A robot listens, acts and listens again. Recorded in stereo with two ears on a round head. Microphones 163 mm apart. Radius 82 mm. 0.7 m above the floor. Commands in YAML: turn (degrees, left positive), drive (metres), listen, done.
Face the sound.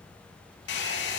turn: 65
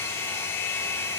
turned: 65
turn: 15
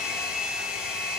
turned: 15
done: "Found it: a hair dryer, straight ahead."